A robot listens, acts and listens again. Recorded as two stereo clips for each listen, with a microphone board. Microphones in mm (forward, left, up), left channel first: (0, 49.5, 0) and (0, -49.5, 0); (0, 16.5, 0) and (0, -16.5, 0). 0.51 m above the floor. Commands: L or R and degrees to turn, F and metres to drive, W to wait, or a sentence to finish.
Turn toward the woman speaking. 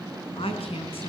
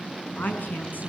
L70
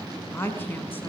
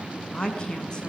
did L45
L20
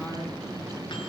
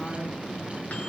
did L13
W
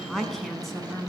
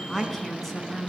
Found it: a woman speaking, straight ahead, over 4 m away.